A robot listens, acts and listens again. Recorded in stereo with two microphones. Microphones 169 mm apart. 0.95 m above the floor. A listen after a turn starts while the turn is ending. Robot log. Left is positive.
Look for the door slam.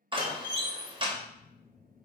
note: The door slam: about 25° right or 155° right.
cmd yaw -25
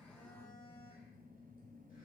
cmd idle
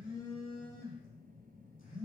end: I heard a door slam, but can't make it out now. It was about straight ahead or 130° right.